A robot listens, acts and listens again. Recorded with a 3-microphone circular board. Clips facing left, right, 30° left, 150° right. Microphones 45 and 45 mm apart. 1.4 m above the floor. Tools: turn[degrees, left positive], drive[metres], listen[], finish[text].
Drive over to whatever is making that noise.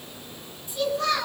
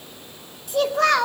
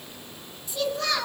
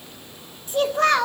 Thought: The child speaking: 110° right.
Action: turn[-110]
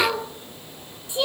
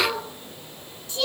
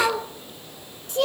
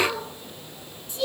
Thought: The child speaking is now 20° left.
Action: turn[20]
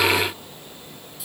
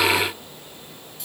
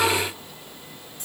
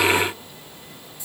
Action: listen[]
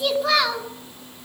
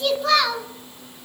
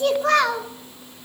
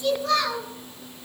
Action: drive[1.0]
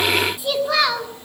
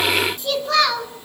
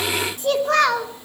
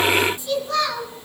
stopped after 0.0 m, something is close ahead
Thought: The child speaking is now 10° left.
Action: turn[10]
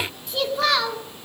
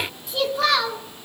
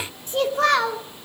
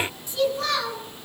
Action: finish[Something is in my way. I am facing the child speaking but have not reached it.]